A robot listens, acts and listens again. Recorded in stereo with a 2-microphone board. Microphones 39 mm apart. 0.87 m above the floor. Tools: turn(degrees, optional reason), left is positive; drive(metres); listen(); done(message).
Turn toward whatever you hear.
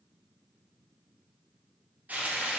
turn(degrees=-40, reason="The frying: about 40° right or 140° right.")
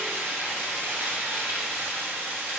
turn(degrees=-95, reason="So it is at 95° right.")
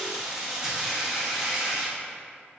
turn(degrees=-10, reason="The frying is now 10° right.")
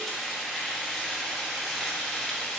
done("Found it: frying, straight ahead.")